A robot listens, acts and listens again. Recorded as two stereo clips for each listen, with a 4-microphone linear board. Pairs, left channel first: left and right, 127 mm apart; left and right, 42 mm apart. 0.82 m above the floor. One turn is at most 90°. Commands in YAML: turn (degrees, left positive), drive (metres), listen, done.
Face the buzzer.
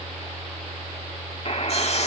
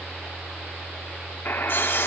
turn: 50
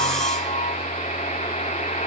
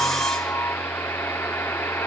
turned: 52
turn: 80
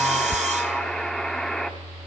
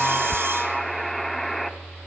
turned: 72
done: "Found it: a buzzer, straight ahead."